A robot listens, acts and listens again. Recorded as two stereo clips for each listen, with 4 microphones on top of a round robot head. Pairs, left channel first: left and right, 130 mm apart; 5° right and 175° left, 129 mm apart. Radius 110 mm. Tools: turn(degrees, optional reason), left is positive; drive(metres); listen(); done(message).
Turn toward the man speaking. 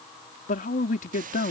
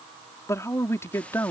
turn(degrees=65, reason="The man speaking: 65° left.")
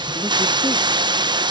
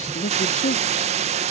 listen()
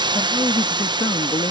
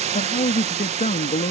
turn(degrees=25, reason="The man speaking is now 25° left.")
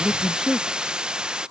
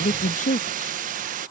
done("Facing the man speaking.")